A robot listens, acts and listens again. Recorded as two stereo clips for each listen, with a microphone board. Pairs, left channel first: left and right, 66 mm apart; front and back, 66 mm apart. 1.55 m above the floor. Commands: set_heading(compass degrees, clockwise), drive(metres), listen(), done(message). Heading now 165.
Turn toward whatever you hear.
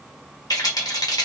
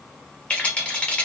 set_heading(95)
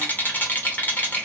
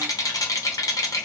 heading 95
set_heading(70)
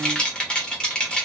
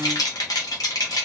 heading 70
set_heading(55)
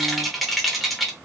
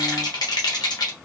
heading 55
done("Found it: a rattle, straight ahead.")